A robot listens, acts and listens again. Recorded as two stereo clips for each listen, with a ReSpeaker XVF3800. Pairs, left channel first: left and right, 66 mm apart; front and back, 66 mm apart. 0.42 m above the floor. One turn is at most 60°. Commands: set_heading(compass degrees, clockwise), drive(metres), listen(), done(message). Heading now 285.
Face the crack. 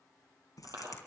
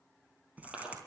set_heading(225)
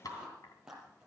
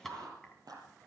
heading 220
set_heading(170)
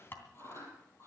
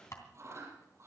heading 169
done("I heard a crack from this way, but can't make it out now.")